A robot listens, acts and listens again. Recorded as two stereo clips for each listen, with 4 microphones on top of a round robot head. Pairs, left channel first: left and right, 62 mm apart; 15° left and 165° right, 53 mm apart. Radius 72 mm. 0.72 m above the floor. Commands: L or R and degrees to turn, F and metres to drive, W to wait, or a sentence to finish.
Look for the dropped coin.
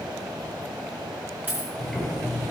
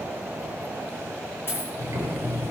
R30
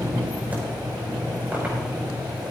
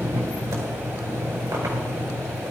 Facing where the dropped coin came from. I can't hear it now.